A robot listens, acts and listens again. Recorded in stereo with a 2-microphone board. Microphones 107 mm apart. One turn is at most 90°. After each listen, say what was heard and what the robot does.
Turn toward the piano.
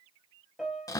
Turn 30° right.
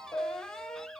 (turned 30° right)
So it is at 25° left. Turn 25° left.
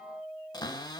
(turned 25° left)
The piano is now 15° right. Turn 15° right.
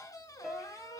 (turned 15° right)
Facing the piano, 1 to 2 m away.